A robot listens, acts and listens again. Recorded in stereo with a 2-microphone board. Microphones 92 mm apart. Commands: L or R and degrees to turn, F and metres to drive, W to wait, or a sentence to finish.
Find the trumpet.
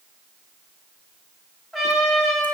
L30
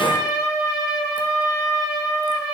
R30
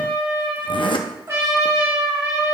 R30
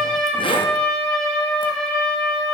L10
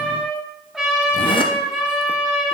Facing the trumpet, 2 to 4 m away.